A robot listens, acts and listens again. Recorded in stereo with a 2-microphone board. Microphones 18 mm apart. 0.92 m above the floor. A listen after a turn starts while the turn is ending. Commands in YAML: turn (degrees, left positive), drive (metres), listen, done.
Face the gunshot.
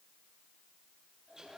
listen: true
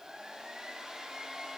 listen: true
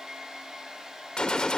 turn: 50
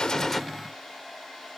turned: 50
listen: true
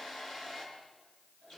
done: "I heard a gunshot, but can't make it out now. It was about straight ahead or 80° left."